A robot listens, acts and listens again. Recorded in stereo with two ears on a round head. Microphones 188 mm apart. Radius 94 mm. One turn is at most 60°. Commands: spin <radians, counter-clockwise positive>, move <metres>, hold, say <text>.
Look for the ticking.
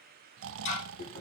spin 1.05
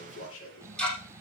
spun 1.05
say Facing the ticking, over 4 m away.